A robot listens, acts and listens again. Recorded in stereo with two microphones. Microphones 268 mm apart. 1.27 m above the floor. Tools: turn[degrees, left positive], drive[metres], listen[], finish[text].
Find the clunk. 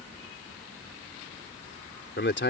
Action: listen[]
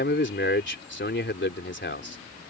Action: listen[]
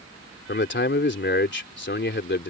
Action: finish[I can't make out a clunk to turn to.]